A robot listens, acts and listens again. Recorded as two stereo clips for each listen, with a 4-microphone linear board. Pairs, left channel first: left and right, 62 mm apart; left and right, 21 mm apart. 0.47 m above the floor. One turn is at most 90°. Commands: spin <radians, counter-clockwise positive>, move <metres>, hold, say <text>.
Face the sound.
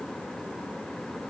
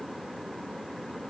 hold
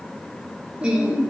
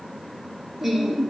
spin -0.52
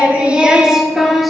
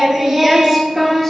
spin 0.52
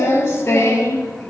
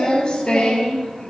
spin 1.57
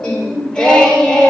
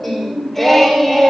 spin 0.26
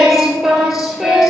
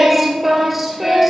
say Facing the singing.